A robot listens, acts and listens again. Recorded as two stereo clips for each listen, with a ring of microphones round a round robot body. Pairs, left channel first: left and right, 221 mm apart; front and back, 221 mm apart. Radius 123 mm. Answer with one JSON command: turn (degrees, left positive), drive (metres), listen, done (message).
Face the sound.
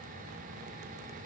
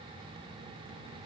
{"listen": true}
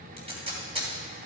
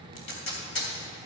{"turn": -25}
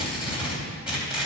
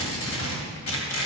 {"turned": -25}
{"done": "Found it: tape being pulled, straight ahead."}